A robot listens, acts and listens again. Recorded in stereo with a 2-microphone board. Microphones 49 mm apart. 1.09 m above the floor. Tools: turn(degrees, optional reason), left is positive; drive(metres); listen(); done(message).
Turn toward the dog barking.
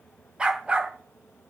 turn(degrees=-20, reason="The dog barking: about 20° right or 160° right.")
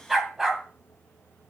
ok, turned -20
turn(degrees=-30)
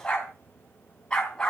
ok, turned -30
turn(degrees=15, reason="So it is at 15° left.")
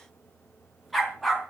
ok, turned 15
done("Found it: a dog barking, straight ahead.")